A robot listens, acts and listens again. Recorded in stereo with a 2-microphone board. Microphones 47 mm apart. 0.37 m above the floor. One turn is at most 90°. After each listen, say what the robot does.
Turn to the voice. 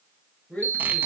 Turn 35° left.
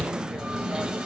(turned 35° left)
Keep listening.
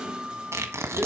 Keep listening.
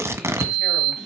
I heard a woman speaking, but can't make it out now. It was about straight ahead or 110° left.